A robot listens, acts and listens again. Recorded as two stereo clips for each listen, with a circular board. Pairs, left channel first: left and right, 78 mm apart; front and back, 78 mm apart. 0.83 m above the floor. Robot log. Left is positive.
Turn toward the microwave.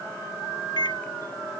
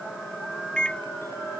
note: The microwave: 80° left.
cmd yaw +80
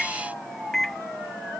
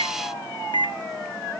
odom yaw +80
end: Facing the microwave.